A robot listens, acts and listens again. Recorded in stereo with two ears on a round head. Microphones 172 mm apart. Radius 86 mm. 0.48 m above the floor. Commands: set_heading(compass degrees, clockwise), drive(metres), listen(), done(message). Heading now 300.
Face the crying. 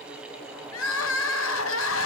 set_heading(210)
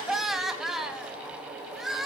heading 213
done("Found it: crying, straight ahead.")